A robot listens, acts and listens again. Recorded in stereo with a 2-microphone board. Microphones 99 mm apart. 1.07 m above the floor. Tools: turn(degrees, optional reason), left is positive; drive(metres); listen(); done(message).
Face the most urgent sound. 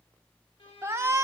turn(degrees=-30, reason="The shout: about 30° right or 150° right.")
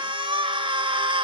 turn(degrees=-125, reason="So it is at 125° right.")
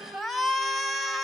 done("Found it: a shout, straight ahead.")